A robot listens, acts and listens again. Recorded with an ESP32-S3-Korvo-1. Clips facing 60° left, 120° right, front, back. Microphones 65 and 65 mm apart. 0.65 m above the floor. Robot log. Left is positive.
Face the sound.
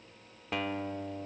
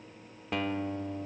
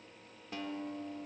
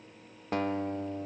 note: The guitar: 150° left.
cmd yaw +150
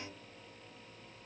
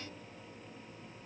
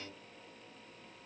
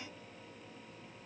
cmd idle
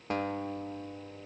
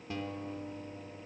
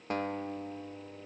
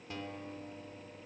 note: The guitar is now 30° left.
cmd yaw +30
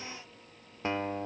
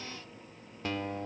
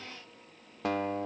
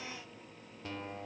end: Found it: a guitar, straight ahead, under 1 m away.